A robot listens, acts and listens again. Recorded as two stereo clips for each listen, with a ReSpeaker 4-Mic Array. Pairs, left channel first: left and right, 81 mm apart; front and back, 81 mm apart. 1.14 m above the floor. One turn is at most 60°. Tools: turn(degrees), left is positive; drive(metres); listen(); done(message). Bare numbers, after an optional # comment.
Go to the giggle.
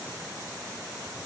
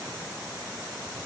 listen()
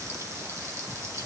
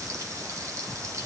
listen()
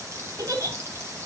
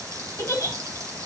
# The giggle: 50° right.
turn(-50)
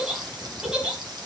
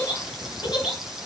# The giggle is now 10° right.
turn(-10)
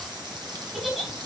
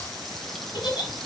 drive(1.0)
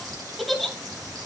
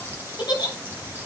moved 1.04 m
drive(1.0)
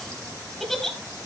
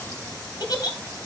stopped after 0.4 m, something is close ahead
done("I am next to the giggle.")